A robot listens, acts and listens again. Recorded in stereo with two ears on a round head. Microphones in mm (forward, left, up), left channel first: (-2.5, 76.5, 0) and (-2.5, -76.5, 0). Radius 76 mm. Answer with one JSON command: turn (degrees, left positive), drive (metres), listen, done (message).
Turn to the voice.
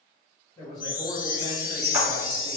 {"turn": 25}
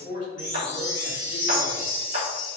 {"turn": 125}
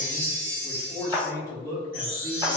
{"turn": 20}
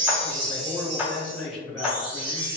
{"done": "Facing the man speaking."}